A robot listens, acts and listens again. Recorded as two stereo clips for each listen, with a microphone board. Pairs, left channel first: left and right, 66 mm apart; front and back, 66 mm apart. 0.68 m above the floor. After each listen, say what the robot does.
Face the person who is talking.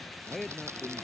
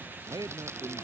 Turn 180° left.
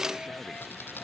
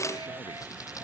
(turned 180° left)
Keep listening.
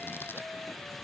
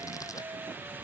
Keep listening.
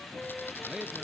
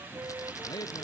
Turn 10° right.
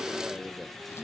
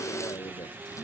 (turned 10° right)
Found it: a man speaking, straight ahead.